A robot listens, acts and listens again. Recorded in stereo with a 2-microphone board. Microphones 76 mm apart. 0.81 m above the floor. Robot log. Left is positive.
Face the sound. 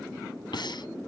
cmd yaw +90
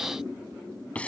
note: So it is at 15° left.
cmd yaw +15
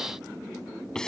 note: The breathing is now 10° left.
cmd yaw +10
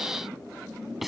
end: Found it: breathing, straight ahead.